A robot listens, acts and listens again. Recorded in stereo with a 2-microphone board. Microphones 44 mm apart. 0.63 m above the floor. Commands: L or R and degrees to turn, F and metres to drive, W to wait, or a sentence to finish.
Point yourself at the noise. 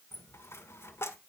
L75
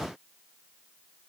W
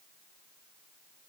I heard a dropped coin, but can't make it out now. It was about straight ahead or 30° left.